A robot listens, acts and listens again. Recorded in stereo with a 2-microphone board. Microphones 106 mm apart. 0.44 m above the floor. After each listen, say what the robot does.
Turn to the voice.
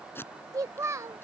Turn 30° right.
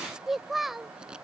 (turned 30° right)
Facing the child speaking.